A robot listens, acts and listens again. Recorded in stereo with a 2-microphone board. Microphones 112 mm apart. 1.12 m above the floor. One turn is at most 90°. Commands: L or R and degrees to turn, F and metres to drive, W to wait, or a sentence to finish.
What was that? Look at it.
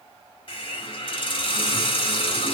L50
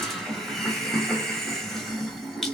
Found it: a hiss, straight ahead, 1 to 2 m away.